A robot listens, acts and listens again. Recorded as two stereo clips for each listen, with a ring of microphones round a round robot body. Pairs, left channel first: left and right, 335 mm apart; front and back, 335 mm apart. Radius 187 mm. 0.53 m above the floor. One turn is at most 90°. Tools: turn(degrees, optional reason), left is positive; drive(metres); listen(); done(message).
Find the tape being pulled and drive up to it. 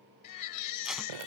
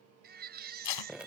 drive(metres=1.0)
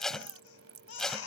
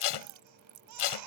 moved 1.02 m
drive(metres=1.0)
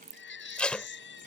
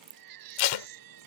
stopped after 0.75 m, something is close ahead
done("Arrived at the tape being pulled, straight ahead.")